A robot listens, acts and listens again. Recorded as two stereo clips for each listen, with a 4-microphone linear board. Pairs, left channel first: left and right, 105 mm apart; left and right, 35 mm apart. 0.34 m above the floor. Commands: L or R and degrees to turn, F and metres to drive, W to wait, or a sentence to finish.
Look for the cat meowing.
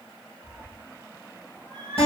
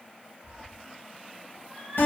L30
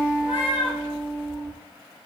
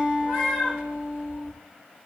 R15
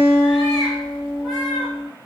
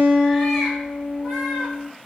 W
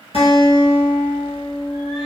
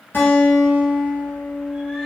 W
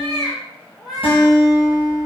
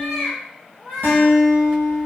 Found it: a cat meowing, straight ahead, 1 to 2 m away.